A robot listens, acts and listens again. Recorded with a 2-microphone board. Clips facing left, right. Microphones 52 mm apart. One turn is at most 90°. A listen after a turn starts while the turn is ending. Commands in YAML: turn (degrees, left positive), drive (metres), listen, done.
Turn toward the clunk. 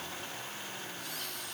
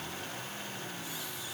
listen: true
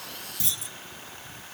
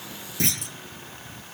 turn: -70
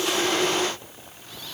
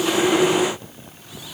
listen: true
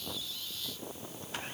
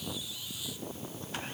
done: "I heard a clunk, but can't make it out now. It was about straight ahead or 40° right."